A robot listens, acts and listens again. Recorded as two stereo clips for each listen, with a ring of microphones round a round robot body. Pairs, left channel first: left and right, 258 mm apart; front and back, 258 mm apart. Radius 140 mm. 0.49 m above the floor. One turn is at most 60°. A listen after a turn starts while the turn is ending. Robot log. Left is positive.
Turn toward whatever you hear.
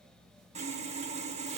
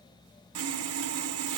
note: The sawing: 155° right.
cmd yaw -60
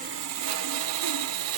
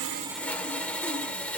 note: The sawing is now 85° right.
cmd yaw -60
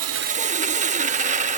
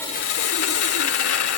note: The sawing is now 30° right.
cmd yaw -30
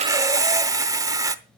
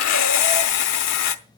note: The sawing is now 15° right.
cmd yaw -15
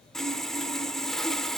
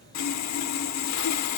end: Facing the sawing, under 1 m away.